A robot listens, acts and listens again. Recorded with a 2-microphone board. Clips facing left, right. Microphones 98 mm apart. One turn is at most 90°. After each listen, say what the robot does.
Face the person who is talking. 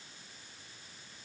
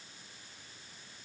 Keep listening.
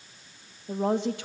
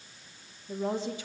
Turn 70° left.
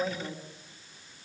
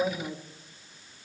Turn 10° right.
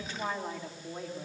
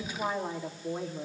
Turn 20° right.
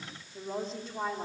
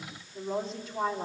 Found it: a woman speaking, straight ahead, 2 to 4 m away.